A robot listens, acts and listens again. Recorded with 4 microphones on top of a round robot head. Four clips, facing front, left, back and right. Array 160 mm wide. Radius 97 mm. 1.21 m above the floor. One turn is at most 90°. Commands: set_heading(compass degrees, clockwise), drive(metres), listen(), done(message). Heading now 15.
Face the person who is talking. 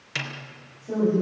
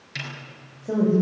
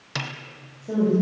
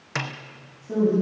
set_heading(285)
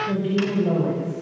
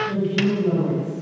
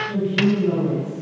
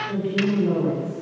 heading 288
set_heading(273)
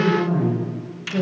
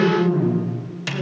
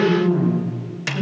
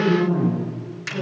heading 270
done("Found it: a woman speaking, straight ahead.")